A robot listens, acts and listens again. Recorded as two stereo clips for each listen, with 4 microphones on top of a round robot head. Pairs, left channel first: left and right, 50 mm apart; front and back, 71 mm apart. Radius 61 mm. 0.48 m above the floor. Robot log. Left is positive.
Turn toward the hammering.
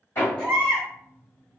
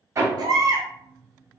note: The hammering: 135° left.
cmd yaw +135
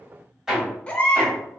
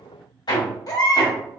note: The hammering is now 10° right.
cmd yaw -10
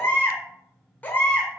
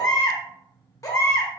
cmd idle
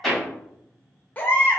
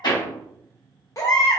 end: Found it: hammering, straight ahead, 1 to 2 m away.